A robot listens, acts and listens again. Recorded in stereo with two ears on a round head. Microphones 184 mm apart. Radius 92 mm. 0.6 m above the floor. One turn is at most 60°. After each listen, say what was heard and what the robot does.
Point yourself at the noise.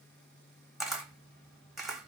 Turn 30° left.
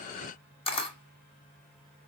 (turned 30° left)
So it is at 150° left. Turn 60° left.
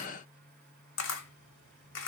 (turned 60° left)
The camera shutter is now 70° left. Turn 60° left.
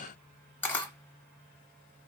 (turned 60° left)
The camera shutter is now 10° left. Turn 10° left.
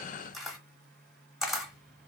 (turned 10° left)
Found it: a camera shutter, straight ahead.